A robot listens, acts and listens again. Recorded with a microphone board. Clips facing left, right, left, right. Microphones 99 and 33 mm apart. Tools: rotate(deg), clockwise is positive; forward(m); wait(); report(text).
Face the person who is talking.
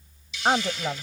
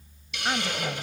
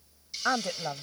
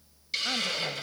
rotate(-45)
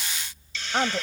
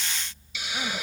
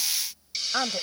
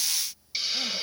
rotate(-85)
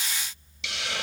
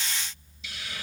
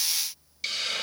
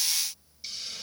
wait()
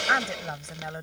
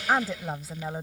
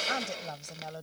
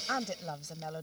report("Found it: a woman speaking, straight ahead.")